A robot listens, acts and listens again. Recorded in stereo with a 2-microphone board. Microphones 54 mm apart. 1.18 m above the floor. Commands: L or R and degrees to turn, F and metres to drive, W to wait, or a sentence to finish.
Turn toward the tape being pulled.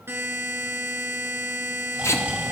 L60
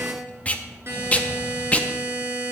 L30
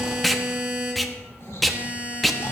Found it: tape being pulled, straight ahead.